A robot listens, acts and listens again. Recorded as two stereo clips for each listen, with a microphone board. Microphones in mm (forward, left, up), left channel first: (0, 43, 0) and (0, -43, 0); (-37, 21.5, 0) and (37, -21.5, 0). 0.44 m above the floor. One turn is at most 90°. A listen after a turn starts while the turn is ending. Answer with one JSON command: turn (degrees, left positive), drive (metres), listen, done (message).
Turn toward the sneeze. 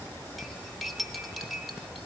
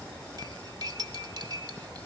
{"listen": true}
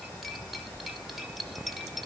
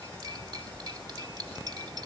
{"listen": true}
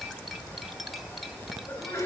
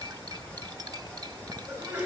{"turn": 40}
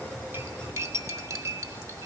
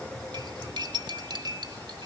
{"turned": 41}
{"done": "I heard a sneeze from this way, but can't make it out now."}